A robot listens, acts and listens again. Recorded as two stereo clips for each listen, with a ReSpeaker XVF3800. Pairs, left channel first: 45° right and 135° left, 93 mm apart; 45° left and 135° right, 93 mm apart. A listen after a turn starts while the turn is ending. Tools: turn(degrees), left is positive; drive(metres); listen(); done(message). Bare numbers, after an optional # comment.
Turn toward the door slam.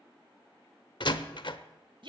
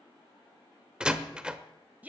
# The door slam: 55° right.
turn(-55)
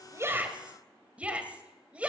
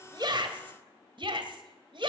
done("Facing where the door slam came from. I can't hear it now.")